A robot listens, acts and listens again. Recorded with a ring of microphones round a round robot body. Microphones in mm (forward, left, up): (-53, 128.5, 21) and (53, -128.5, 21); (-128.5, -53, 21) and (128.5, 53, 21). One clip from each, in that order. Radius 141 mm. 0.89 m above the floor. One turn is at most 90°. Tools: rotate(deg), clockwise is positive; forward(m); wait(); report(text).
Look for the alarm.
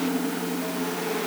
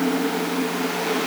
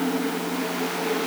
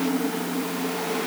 wait()
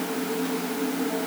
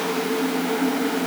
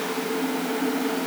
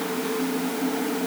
wait()
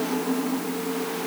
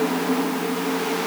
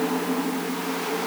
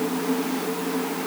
report("I can't make out an alarm.")